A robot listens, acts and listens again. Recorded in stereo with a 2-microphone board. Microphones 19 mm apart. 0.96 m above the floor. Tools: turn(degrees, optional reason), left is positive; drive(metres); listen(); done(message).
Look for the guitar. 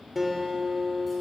turn(degrees=-30)
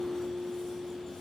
turn(degrees=-135, reason="So it is at 135° right.")
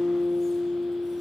done("Found it: a guitar, straight ahead, 2 to 4 m away.")